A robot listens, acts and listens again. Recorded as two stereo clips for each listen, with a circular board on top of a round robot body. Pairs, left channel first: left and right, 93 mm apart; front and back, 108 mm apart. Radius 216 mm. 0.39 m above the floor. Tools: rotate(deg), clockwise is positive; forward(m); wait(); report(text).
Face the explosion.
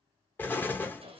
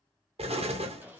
rotate(-160)
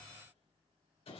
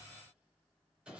report("I heard an explosion from this way, but can't make it out now.")